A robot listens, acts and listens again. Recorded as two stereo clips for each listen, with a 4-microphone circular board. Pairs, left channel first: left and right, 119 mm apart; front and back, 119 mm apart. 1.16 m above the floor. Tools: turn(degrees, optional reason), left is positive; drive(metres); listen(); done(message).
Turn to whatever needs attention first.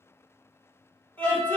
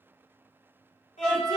turn(degrees=15, reason="The scream: 15° left.")
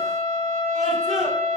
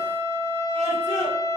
listen()
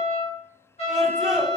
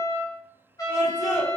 done("Found it: a scream, straight ahead, 1 to 2 m away.")